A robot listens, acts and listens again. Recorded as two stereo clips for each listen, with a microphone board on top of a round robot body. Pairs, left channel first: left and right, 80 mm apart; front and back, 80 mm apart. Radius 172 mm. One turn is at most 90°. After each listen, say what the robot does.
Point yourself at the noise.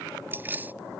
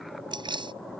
Turn 90° right.
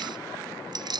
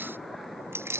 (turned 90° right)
Turn 90° right.
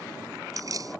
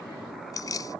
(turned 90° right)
Turn 45° right.
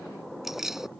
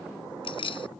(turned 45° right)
Facing the keys jangling.